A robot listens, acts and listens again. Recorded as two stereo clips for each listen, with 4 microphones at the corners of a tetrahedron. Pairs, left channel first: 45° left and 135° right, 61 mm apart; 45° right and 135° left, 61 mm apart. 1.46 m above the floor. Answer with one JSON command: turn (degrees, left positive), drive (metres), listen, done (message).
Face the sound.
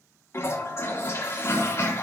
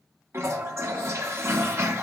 {"turn": 90}
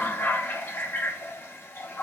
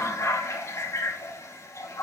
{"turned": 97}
{"done": "Found it: a toilet flushing, straight ahead."}